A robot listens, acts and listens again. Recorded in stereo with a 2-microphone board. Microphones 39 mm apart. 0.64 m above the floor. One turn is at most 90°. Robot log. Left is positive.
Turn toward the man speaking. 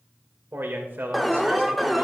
note: The man speaking: about 60° right or 120° right.
cmd yaw -60
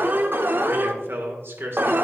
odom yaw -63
note: So it is at 65° right.
cmd yaw -65
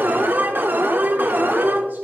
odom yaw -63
cmd idle
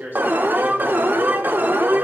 note: The man speaking is now 55° right.
cmd yaw -55
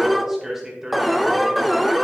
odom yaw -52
note: The man speaking is now 10° right.
cmd yaw -10
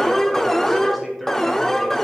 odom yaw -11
cmd idle
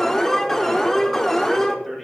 cmd idle
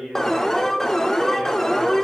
end: Facing the man speaking, 2 to 4 m away.